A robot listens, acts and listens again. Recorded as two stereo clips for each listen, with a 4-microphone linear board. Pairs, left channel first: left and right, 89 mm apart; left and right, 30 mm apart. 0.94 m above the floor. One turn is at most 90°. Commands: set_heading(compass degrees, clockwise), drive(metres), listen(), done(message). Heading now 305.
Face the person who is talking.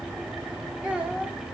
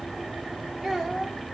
set_heading(335)
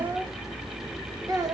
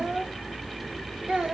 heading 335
set_heading(65)
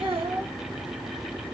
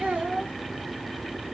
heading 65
set_heading(150)
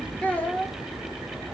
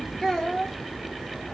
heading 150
set_heading(135)
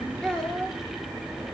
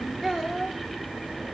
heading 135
set_heading(125)
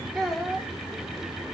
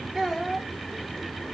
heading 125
done("Facing the child speaking.")